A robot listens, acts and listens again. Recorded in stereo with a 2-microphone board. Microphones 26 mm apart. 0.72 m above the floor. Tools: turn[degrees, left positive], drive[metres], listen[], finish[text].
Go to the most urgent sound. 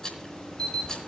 Thought: The alarm: about 35° left or 145° left.
Action: turn[35]
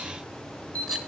Thought: So it is at 110° left.
Action: turn[110]
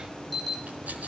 Action: drive[1.0]
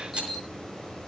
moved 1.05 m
Action: drive[1.0]
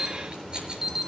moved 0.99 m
Thought: The alarm is now 15° right.
Action: turn[-15]
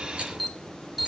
Action: drive[1.0]
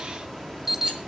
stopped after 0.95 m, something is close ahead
Thought: The alarm is now 10° right.
Action: turn[-10]
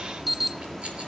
Action: finish[I am next to the alarm.]